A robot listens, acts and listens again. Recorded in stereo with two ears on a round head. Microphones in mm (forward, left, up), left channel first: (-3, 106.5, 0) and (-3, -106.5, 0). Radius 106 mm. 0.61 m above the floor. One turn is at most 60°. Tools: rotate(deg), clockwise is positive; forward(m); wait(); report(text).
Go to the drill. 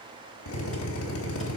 rotate(-60)
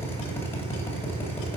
rotate(-10)
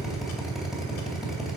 forward(1.0)
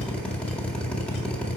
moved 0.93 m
forward(1.0)
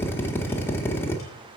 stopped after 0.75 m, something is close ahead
rotate(-10)
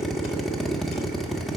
report("Arrived at the drill, straight ahead.")